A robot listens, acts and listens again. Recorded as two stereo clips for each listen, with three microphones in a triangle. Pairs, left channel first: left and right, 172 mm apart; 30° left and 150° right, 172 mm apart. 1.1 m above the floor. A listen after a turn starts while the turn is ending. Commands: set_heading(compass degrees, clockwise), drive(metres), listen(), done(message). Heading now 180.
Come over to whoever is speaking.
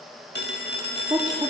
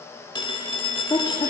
set_heading(205)
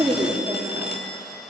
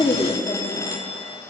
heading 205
set_heading(225)
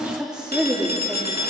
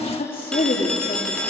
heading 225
drive(1.0)
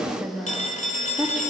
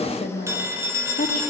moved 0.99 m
drive(1.0)
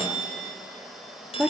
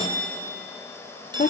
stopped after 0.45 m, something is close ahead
set_heading(235)
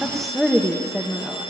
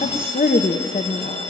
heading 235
done("Arrived at the woman speaking, straight ahead.")